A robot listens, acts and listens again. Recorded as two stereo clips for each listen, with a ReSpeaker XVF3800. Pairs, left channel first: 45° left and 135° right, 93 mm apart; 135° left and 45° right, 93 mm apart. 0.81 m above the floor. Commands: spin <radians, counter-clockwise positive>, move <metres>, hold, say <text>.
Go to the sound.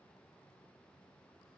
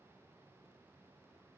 hold
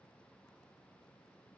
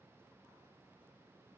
hold
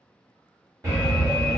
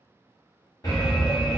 spin 3.05
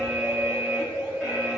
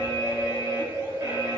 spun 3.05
spin -0.70
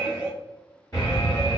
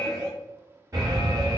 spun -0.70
move 1.0
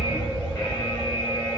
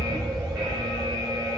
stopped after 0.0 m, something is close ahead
say Something is in my way. I am facing the alarm but have not reached it.